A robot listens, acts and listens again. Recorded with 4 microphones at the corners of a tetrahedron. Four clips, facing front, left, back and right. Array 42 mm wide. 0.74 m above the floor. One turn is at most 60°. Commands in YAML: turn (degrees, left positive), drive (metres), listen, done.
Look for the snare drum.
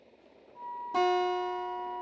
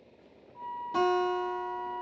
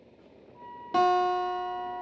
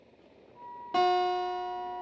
listen: true
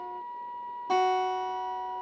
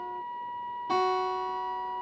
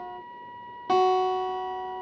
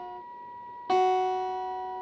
listen: true
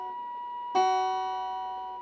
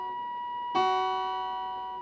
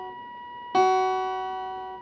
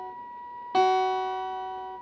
done: "I can't make out a snare drum, only a flute and a guitar."